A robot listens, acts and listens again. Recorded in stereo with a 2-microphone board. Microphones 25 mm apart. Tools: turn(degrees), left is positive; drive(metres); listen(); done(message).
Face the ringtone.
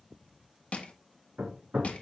listen()
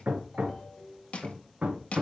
turn(degrees=20)
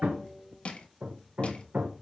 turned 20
listen()
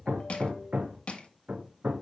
listen()
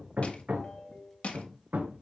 turn(degrees=135)
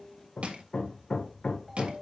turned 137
done("Facing the ringtone, 2 to 4 m away.")